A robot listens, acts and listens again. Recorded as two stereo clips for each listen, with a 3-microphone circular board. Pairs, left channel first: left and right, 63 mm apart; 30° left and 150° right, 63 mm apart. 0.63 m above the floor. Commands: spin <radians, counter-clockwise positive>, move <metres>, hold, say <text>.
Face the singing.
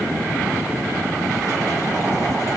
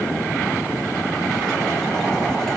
hold
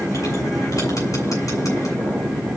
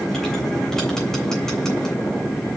hold
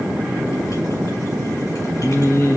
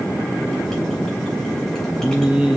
spin 2.27
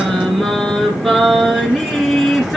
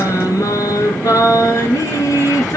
say Found it: singing, straight ahead, 2 to 4 m away.